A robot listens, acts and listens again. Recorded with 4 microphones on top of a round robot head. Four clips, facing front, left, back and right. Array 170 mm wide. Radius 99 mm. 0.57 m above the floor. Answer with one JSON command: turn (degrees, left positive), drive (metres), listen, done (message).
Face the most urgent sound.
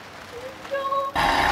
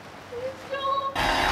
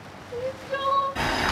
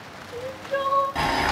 {"turn": 140}
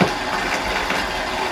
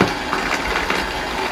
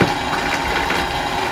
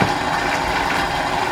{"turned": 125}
{"turn": 15}
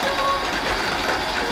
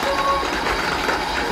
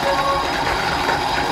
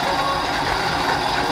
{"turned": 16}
{"listen": true}
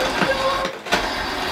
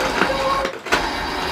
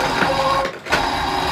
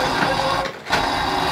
{"done": "Facing where the crying came from. I can't hear it now."}